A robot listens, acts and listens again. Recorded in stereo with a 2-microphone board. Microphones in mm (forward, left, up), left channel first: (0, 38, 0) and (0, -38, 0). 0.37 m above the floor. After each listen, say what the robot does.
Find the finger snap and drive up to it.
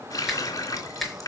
Turn 30° left.
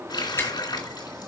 Turn 150° left.
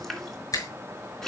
Turn 50° left.
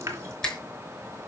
Turn 10° left.
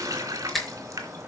Drive 1.0 m forward.
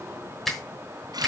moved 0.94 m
Drive 1.0 m forward.
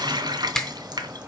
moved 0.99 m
Drive 1.0 m forward.
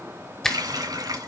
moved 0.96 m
Drive 1.0 m forward.
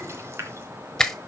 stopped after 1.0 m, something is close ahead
I am next to the finger snap.